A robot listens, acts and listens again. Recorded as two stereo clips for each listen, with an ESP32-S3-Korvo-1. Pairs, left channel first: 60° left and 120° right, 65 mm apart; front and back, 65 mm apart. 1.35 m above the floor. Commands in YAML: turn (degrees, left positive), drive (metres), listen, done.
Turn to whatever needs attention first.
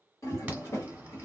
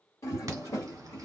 turn: 180
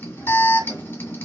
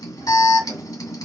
done: "Facing the alarm."